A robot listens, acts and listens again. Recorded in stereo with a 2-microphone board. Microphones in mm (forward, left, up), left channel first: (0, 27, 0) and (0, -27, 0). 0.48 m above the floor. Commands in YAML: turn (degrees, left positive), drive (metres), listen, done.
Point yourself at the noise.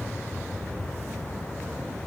listen: true
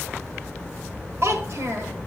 turn: -60
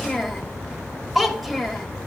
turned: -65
done: "Facing the child speaking, 1 to 2 m away."